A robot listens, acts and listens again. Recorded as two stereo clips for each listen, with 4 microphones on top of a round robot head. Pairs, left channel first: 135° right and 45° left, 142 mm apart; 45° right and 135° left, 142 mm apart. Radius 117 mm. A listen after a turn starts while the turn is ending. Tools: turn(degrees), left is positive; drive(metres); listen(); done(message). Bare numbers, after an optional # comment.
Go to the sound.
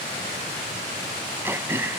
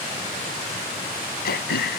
# The throat clearing: 30° right.
turn(-30)
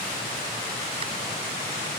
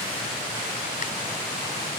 listen()
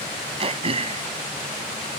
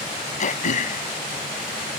drive(1.0)
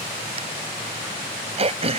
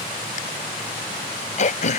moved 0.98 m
drive(1.0)
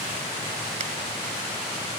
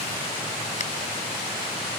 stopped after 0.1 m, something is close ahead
listen()
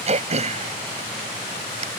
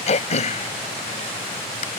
done("Blocked. The throat clearing is further on, straight ahead.")